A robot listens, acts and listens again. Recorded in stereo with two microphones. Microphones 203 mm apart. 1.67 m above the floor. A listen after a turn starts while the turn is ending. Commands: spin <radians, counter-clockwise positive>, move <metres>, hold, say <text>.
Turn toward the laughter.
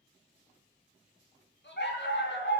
spin 1.05
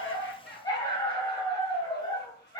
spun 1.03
hold
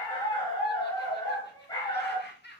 spin 0.96
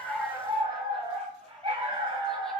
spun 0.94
hold
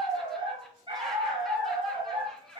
hold
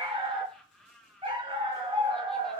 say Found it: laughter, straight ahead, 1 to 2 m away.